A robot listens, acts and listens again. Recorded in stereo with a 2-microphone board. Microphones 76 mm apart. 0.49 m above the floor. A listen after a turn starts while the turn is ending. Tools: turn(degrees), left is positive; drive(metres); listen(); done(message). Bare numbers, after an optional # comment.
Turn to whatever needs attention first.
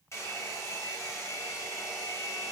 listen()
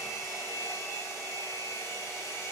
listen()
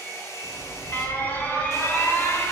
# The alarm: about 25° left or 155° left.
turn(25)
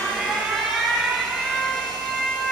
done("Facing the alarm, under 1 m away.")